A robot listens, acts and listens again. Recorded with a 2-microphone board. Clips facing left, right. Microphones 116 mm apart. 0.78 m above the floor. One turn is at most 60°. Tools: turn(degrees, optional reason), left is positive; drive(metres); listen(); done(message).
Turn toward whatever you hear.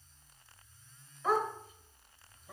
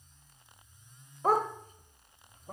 turn(degrees=-45, reason="The dog barking: about 45° right or 135° right.")
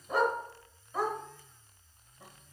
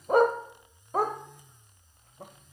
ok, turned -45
turn(degrees=-60, reason="So it is at 80° right.")
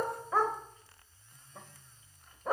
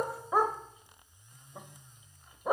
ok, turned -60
turn(degrees=-20, reason="The dog barking is now 20° right.")
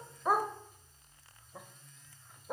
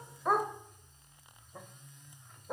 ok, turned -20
done("Found it: a dog barking, straight ahead, under 1 m away.")